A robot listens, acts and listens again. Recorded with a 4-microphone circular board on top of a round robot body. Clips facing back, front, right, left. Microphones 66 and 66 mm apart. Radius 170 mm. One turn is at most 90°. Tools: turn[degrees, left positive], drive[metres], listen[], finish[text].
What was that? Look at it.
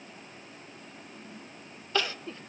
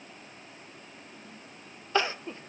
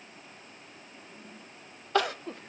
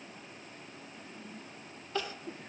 Thought: The crying: 65° right.
Action: turn[-65]
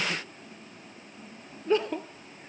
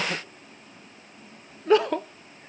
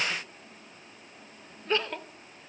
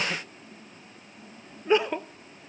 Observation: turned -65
Thought: The crying is now 10° left.
Action: turn[10]
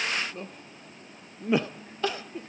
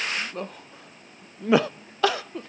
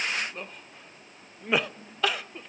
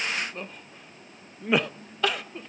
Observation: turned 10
Action: finish[Found it: crying, straight ahead, under 1 m away.]